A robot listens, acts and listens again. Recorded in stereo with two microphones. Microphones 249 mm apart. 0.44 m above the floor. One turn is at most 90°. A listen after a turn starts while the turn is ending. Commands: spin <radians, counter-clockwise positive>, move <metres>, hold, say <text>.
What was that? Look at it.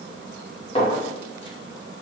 spin 0.44
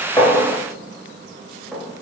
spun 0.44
say Facing the clink.